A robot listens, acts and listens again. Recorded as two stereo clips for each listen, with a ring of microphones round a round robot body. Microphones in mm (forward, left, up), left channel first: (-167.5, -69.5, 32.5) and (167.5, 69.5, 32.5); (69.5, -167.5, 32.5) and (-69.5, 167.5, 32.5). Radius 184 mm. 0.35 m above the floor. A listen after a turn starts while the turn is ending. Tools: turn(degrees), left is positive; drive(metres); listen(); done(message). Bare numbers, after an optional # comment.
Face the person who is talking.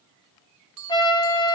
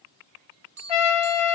listen()
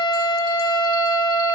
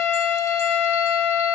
listen()
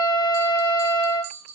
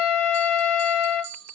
done("I can't make out anyone speaking to turn to.")